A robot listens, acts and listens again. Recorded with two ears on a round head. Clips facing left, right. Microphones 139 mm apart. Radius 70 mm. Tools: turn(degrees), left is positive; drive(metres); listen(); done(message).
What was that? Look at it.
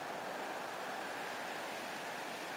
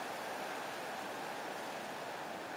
listen()
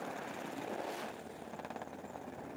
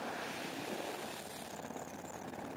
listen()
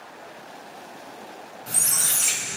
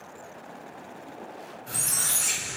turn(degrees=90)
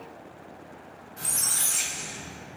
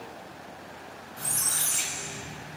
done("Found it: a squeak, straight ahead, 1 to 2 m away.")